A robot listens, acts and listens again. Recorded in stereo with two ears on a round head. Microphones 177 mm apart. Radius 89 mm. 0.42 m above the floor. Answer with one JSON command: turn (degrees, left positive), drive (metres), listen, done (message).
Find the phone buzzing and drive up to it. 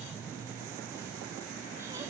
{"listen": true}
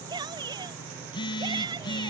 {"turn": 25}
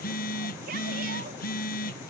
{"turn": 130}
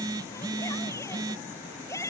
{"turn": -20}
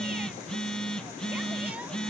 {"drive": 1.0}
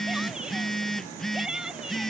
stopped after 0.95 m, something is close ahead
{"done": "Blocked. The phone buzzing is further on, straight ahead."}